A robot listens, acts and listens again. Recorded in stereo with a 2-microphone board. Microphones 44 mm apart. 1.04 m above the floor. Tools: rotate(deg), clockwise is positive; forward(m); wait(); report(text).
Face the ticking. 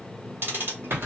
rotate(60)
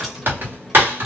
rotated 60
wait()
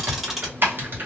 wait()
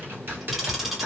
report("I heard ticking, but can't make it out now. It was about straight ahead or 60° right.")